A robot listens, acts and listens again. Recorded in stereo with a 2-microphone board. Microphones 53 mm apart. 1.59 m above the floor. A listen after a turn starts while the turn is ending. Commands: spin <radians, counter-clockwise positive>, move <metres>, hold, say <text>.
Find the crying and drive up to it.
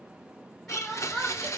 spin 0.52
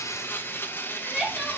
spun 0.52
spin -0.44
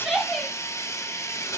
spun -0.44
move 1.0
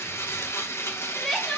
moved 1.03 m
move 1.0
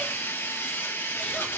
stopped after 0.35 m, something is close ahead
hold
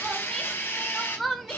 say Arrived at the crying, straight ahead.